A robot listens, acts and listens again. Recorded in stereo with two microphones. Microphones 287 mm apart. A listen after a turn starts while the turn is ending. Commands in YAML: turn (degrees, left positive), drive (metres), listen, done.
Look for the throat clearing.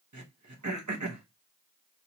turn: -90
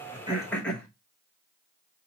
done: "Found it: throat clearing, straight ahead, 1 to 2 m away."